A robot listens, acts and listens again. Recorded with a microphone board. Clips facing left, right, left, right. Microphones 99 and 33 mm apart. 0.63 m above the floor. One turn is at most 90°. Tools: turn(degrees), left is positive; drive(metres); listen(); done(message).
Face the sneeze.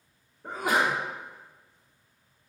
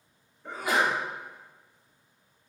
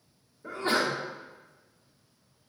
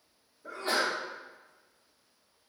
turn(degrees=55)
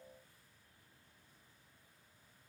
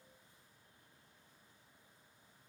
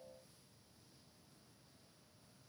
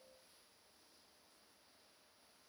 listen()
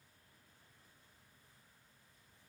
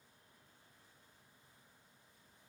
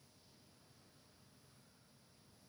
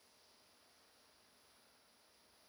done("I heard a sneeze, but can't make it out now. It was about straight ahead or 70° left.")